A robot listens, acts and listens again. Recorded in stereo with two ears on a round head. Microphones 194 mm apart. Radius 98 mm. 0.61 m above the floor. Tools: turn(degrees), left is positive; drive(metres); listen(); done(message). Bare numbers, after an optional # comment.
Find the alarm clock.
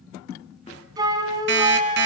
# The alarm clock: about 60° right or 120° right.
turn(-60)
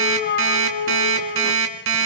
# So it is at 60° right.
turn(-60)
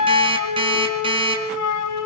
# The alarm clock is now 25° right.
turn(-25)
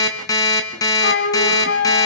# The alarm clock is now 15° left.
turn(15)
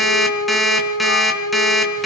done("Facing the alarm clock.")